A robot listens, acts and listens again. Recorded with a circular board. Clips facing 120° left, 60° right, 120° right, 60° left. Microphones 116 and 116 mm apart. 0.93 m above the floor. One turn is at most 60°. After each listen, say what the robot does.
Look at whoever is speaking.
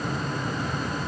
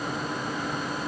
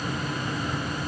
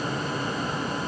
Keep listening.
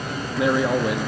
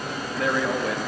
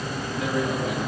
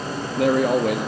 Turn 45° left.
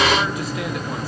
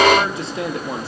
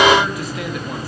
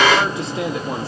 Facing the man speaking.